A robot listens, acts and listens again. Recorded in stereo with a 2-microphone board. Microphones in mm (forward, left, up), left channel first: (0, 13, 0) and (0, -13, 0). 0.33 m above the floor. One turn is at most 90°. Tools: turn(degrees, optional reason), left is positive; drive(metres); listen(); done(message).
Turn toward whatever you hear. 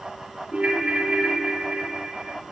turn(degrees=-50, reason="The ringtone: about 50° right or 130° right.")
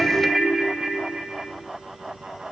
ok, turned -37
turn(degrees=-20, reason="So it is at 20° right.")
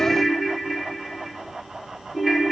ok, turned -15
done("Facing the ringtone, 1 to 2 m away.")